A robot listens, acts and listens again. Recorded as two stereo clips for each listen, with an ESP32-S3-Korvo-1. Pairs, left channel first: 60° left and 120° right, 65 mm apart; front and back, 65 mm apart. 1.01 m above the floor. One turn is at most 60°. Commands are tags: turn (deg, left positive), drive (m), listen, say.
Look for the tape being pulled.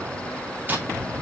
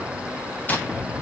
<listen/>
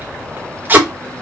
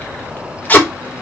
<turn deg="-60"/>
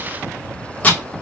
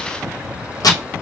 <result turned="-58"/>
<say>Facing the tape being pulled.</say>